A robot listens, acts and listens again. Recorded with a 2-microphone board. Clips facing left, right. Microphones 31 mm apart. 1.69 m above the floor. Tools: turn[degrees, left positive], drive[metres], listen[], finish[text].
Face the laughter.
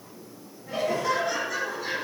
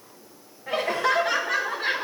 Thought: The laughter: about 50° right or 130° right.
Action: turn[-50]
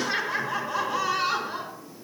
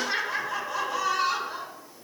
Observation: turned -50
Thought: So it is at 15° left.
Action: turn[15]
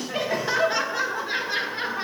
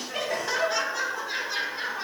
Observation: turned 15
Thought: The laughter is now 25° left.
Action: turn[25]
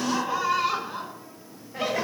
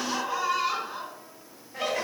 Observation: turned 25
Thought: The laughter is now 10° left.
Action: turn[10]
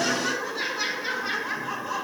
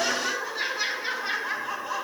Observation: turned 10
Action: finish[Facing the laughter, 2 to 4 m away.]